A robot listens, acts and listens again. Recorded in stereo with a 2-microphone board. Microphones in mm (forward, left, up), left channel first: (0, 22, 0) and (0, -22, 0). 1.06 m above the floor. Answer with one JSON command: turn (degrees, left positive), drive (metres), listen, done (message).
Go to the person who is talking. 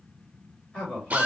{"turn": 25}
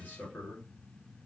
{"turn": 125}
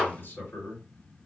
{"turn": 60}
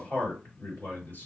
{"turn": 40}
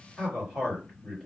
{"drive": 1.0}
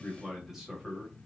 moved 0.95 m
{"turn": -10}
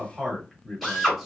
{"drive": 1.0}
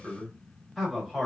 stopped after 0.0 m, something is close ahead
{"done": "Arrived at the man speaking, straight ahead."}